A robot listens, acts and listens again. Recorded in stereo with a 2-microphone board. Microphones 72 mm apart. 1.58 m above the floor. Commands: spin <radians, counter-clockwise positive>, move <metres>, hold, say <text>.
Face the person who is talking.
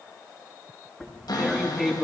hold
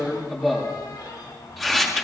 hold
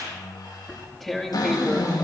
spin 0.61
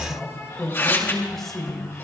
say Facing the man speaking.